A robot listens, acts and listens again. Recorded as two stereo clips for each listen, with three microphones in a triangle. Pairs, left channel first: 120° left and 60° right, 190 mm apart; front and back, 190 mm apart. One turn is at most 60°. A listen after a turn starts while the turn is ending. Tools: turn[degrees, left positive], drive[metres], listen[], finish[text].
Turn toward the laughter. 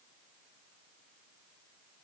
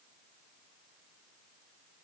Action: listen[]
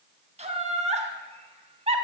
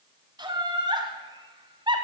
Thought: The laughter: 115° right.
Action: turn[-60]
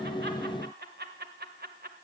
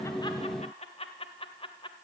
Thought: The laughter is now 55° right.
Action: turn[-55]
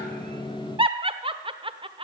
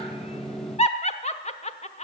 Thought: The laughter is now 20° right.
Action: turn[-20]
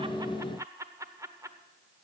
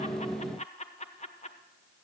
Action: finish[Found it: laughter, straight ahead, 1 to 2 m away.]